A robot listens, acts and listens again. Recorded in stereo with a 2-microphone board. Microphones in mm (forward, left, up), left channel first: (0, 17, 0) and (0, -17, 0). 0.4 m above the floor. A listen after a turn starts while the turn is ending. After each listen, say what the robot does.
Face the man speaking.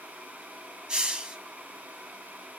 Keep listening.
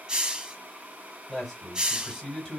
Turn 30° left.
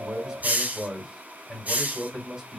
Turn 15° right.
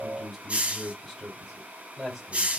Facing the man speaking.